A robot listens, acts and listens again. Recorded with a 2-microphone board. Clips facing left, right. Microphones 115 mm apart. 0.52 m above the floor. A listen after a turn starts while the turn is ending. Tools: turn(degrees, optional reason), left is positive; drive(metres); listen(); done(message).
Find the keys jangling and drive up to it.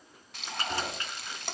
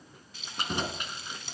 turn(degrees=-15, reason="The keys jangling: about 15° right or 165° right.")
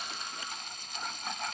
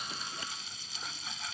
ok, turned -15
listen()
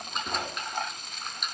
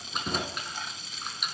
drive(metres=1.0)
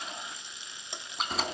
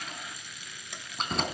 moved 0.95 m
drive(metres=1.0)
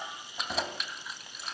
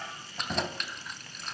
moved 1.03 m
drive(metres=1.0)
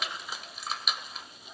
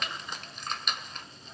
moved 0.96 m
drive(metres=1.0)
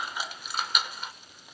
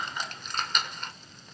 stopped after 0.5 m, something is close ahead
turn(degrees=10, reason="The keys jangling is now 10° left.")
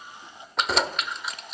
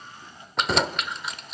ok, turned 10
done("I am next to the keys jangling.")